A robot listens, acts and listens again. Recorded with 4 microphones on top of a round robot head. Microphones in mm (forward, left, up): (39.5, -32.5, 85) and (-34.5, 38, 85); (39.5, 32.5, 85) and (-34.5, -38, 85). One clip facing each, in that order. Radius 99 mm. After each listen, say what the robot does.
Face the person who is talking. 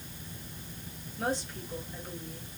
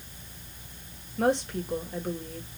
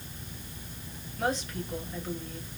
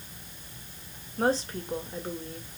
Turn 165° left.
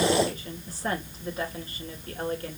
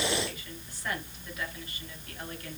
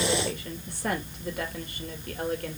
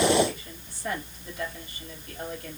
Turn 10° left.
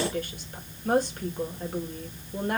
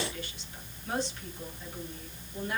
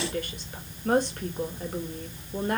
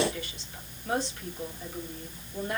Facing the woman speaking, 2 to 4 m away.